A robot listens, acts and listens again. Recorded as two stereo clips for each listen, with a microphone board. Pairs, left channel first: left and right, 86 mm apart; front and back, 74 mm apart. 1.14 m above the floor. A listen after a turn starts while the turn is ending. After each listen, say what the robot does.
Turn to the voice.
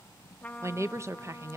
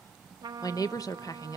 Turn 35° right.
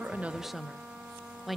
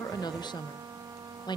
Found it: a woman speaking, straight ahead.